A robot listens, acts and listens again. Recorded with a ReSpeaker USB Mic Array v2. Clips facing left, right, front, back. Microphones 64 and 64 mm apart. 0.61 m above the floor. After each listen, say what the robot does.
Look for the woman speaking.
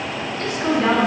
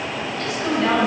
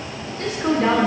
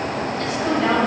Turn 40° left.
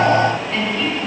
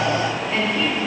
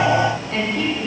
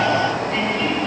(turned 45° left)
Turn 25° right.
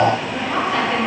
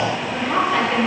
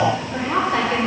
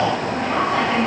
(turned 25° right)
Turn 15° right.
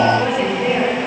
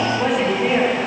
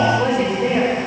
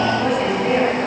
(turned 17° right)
Found it: a woman speaking, straight ahead.